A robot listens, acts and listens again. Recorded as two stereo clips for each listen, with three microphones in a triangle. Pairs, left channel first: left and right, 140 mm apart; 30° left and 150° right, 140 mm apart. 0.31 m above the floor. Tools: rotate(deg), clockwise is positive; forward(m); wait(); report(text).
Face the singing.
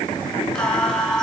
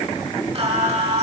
rotate(-175)
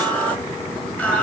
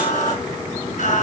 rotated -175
rotate(-15)
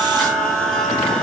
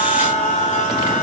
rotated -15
report("Facing the singing.")